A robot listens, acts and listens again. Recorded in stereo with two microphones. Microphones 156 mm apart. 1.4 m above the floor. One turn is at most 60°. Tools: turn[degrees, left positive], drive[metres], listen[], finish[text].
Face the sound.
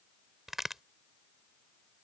Action: turn[30]
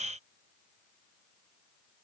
Action: listen[]
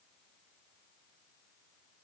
Action: finish[I heard a crack, but can't make it out now. It was about 30° right or 150° left.]